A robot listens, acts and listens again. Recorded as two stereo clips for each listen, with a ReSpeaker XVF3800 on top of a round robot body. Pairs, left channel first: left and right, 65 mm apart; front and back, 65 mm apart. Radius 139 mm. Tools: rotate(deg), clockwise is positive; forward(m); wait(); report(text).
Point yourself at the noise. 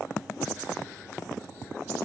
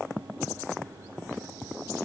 wait()
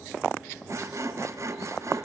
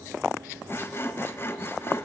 rotate(50)
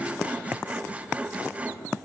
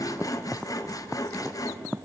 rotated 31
rotate(20)
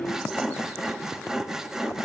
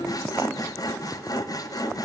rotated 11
rotate(10)
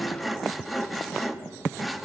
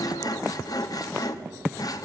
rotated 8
report("Facing the sawing, 1 to 2 m away.")